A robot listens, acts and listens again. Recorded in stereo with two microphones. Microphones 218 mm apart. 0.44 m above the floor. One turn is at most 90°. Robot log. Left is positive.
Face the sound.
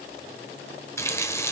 cmd yaw +30
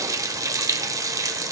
note: So it is at 15° right.
cmd yaw -15
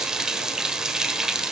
end: Found it: a running tap, straight ahead.